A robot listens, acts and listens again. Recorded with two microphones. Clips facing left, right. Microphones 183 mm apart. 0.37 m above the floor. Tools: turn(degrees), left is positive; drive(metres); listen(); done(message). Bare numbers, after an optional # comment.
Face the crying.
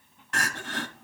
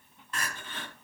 turn(90)
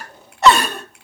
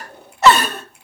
done("Facing the crying.")